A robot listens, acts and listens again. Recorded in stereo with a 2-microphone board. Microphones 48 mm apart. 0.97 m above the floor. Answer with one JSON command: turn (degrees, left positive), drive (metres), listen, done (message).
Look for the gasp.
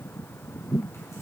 {"listen": true}
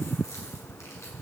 {"listen": true}
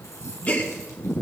{"turn": 35}
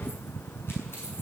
{"listen": true}
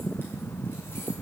{"done": "I heard a gasp, but can't make it out now. It was about straight ahead or 110° left."}